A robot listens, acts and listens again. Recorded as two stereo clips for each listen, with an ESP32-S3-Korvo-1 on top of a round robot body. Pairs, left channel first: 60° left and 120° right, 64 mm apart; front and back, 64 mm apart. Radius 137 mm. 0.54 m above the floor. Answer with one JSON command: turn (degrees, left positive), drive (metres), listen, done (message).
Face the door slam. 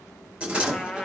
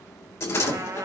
{"turn": -45}
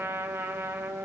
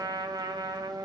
{"done": "I heard a door slam from this way, but can't make it out now."}